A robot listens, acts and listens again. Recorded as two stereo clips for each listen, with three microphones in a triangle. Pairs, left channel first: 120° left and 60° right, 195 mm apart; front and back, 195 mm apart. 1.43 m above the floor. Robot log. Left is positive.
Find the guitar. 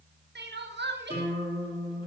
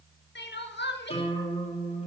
note: The guitar: 55° left.
cmd yaw +55
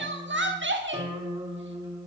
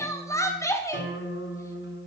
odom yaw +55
note: The guitar is now 10° left.
cmd yaw +10
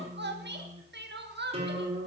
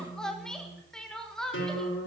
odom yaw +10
end: Found it: a guitar, straight ahead.